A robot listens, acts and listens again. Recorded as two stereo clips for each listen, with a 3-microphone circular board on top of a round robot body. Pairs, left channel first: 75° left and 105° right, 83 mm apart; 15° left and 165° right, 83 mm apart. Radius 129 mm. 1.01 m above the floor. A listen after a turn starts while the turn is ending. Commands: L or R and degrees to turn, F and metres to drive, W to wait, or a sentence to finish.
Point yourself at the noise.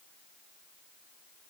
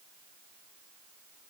W
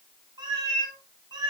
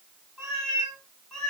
R70
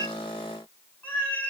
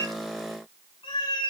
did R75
L10
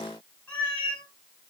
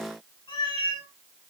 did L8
Found it: a cat meowing, straight ahead.